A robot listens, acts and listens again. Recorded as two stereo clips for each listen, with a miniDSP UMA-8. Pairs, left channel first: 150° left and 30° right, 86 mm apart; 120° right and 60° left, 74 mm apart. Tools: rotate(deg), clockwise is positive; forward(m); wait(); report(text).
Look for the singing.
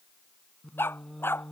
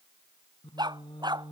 rotate(125)
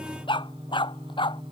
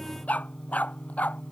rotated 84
rotate(45)
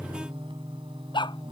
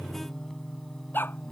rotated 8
rotate(35)
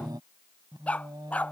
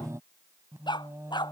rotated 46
rotate(-10)
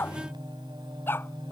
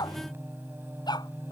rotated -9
report("Found it: singing, straight ahead.")